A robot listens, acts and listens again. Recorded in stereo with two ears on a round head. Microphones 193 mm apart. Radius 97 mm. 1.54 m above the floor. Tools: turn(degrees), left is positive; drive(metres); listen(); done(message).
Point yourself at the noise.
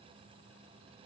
listen()
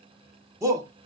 turn(degrees=-30)
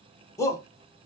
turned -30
turn(degrees=15)
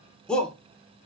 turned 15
done("Facing the shout.")